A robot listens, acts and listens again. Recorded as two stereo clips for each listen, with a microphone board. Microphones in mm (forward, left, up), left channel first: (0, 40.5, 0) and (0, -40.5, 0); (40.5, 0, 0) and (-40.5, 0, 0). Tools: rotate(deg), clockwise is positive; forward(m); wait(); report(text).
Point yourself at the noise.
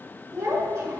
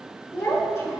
rotate(40)
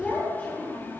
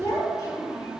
rotate(-35)
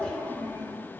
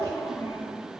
rotate(-25)
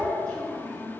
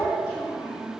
rotate(-20)
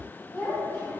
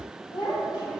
rotate(-10)
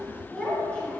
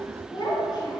report("Facing the child speaking, 2 to 4 m away.")